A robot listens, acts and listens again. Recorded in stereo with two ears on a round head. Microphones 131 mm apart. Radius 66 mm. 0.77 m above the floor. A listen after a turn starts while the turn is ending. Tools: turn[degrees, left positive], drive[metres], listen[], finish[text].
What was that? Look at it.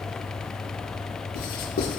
Thought: The writing: about 75° left or 105° left.
Action: turn[75]
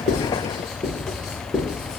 Action: finish[Facing the writing.]